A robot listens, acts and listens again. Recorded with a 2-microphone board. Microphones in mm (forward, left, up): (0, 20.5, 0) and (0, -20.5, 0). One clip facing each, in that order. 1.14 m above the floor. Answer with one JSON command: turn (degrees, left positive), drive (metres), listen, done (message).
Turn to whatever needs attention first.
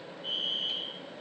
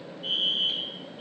{"turn": -70}
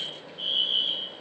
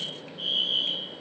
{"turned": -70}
{"done": "Facing the fire alarm."}